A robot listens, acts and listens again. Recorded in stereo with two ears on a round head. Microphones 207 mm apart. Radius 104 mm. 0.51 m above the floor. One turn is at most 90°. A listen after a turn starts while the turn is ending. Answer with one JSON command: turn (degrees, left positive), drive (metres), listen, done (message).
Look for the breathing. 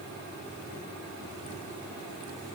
{"listen": true}
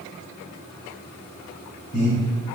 {"turn": 30}
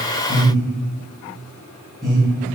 {"done": "Found it: breathing, straight ahead, 1 to 2 m away."}